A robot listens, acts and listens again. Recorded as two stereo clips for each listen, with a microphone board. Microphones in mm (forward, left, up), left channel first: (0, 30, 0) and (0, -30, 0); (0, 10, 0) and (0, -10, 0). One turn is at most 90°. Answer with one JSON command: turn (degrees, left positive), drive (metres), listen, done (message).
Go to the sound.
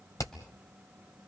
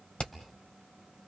{"turn": 65}
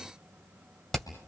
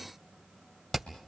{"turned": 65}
{"drive": 1.0}
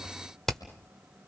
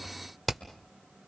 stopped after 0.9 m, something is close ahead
{"turn": 10}
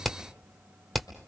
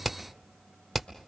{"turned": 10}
{"done": "Arrived at the hammering, straight ahead."}